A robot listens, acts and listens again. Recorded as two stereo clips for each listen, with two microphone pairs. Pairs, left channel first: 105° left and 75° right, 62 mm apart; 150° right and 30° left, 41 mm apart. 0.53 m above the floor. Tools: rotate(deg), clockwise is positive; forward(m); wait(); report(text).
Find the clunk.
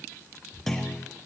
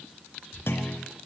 rotate(170)
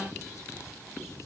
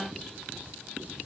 report("I heard a clunk from this way, but can't make it out now.")